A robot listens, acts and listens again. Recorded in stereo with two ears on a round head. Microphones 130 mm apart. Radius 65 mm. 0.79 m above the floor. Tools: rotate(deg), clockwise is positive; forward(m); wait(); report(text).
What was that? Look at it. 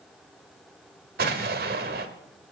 rotate(75)
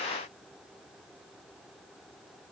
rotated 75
wait()
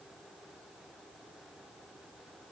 report("I heard an explosion, but can't make it out now. It was about straight ahead or 30° right.")